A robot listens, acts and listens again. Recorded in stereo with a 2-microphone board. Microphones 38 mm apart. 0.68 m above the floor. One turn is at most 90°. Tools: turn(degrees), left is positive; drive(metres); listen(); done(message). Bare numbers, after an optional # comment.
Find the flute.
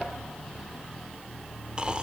listen()
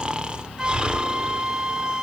# The flute: about 20° right or 160° right.
turn(-20)
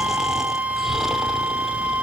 # So it is at 140° right.
turn(-90)
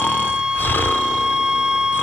# The flute is now 25° right.
turn(-25)
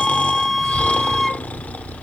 done("Found it: a flute, straight ahead, under 1 m away.")